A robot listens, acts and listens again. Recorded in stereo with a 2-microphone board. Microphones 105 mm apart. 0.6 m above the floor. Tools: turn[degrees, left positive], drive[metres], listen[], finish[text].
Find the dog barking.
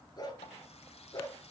Thought: The dog barking: about 40° left or 140° left.
Action: turn[40]
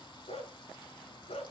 Thought: So it is at 105° left.
Action: turn[105]
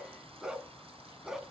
Action: finish[Found it: a dog barking, straight ahead, 2 to 4 m away.]